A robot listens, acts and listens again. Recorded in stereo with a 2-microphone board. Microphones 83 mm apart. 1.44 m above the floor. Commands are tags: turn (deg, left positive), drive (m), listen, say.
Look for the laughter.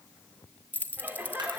<turn deg="-25"/>
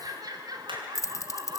<turn deg="-125"/>
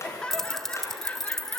<turn deg="15"/>
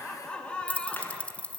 <turn deg="10"/>
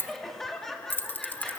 <say>Found it: laughter, straight ahead.</say>